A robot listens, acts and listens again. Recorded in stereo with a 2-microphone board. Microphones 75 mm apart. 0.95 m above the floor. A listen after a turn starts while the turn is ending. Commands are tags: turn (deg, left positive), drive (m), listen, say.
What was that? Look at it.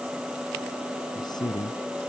<turn deg="70"/>
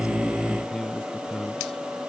<say>Found it: a man speaking, straight ahead.</say>